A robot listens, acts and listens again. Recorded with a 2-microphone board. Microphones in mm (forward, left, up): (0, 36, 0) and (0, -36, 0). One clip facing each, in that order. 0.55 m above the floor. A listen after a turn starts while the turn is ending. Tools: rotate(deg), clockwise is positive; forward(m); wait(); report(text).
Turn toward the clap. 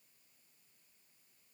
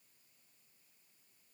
wait()
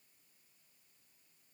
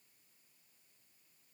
wait()
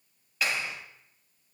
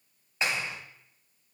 rotate(25)
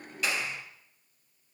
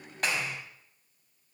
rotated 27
rotate(125)
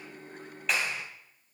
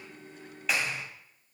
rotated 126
report("Found it: a clap, straight ahead.")